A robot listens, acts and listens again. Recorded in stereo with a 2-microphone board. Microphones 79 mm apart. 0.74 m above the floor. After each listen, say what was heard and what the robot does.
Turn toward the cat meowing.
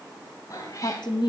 The cat meowing: about 45° left or 135° left. Turn 45° left.
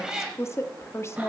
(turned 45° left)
So it is at 10° right. Turn 10° right.
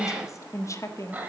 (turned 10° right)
The cat meowing is now 25° right. Turn 25° right.
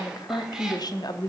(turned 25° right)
Keep listening.
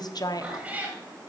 The cat meowing is now 20° right. Turn 20° right.
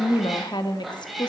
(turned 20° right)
Facing the cat meowing, 2 to 4 m away.